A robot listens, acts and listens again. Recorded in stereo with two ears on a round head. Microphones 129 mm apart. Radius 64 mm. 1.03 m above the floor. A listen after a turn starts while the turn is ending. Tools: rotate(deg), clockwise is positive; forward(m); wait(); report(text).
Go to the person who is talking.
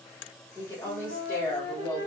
rotate(-15)
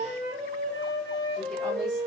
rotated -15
wait()
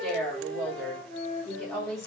forward(1.0)
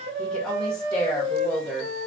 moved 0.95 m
forward(1.0)
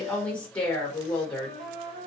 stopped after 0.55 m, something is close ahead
rotate(-10)
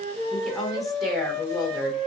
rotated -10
report("Arrived at the woman speaking, straight ahead.")